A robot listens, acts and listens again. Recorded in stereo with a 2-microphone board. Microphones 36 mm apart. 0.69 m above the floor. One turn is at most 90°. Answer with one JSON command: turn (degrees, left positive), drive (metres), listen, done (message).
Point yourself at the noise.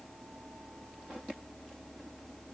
{"listen": true}
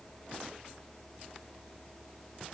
{"listen": true}
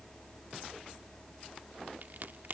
{"turn": -60}
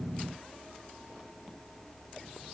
{"listen": true}
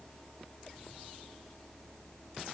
{"done": "I heard a crack, but can't make it out now. It was about straight ahead or 60° right."}